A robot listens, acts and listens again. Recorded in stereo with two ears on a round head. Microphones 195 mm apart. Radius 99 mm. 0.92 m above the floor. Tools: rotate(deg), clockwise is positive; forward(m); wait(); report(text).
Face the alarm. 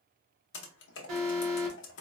rotate(90)
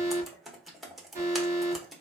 rotate(15)
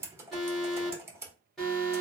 report("Found it: an alarm, straight ahead, 1 to 2 m away.")